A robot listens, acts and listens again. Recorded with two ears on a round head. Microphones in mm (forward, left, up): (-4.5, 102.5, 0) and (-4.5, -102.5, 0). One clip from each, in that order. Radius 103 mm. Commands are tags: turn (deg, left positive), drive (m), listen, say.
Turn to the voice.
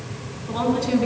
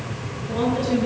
<turn deg="65"/>
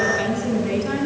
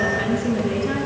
<turn deg="50"/>
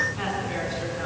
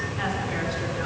<listen/>
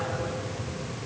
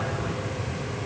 <listen/>
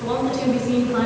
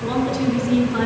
<say>Facing the woman speaking.</say>